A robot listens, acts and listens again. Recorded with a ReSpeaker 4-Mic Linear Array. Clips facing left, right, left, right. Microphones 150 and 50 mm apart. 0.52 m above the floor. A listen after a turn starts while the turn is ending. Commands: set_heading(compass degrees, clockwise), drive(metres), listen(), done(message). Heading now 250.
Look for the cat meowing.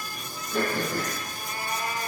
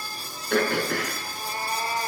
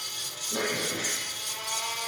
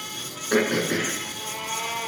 set_heading(280)
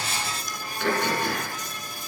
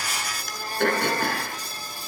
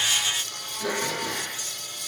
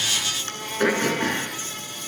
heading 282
listen()
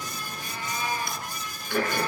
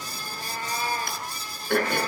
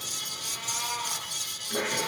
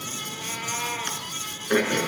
set_heading(62)
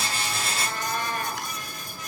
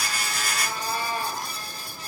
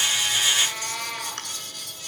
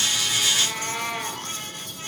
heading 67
set_heading(77)
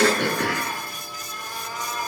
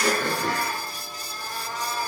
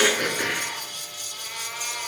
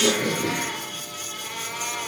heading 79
done("Facing the cat meowing, 2 to 4 m away.")